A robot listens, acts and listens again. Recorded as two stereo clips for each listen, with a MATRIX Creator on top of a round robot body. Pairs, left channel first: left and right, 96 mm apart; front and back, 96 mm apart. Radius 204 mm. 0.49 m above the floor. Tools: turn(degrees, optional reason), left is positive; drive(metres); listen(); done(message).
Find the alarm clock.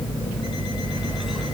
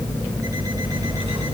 listen()
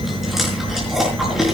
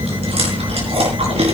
listen()
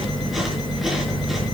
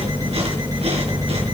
done("I can't make out an alarm clock, only chewing.")